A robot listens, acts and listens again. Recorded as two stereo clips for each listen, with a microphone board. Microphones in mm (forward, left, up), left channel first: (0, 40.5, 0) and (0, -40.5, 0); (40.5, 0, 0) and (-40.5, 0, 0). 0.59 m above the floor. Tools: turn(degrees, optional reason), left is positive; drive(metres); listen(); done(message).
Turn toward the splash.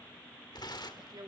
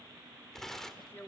listen()
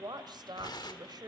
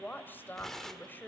listen()
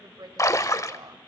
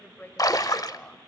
turn(degrees=40, reason="The splash: 40° left.")
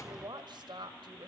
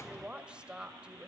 done("I heard a splash from this way, but can't make it out now.")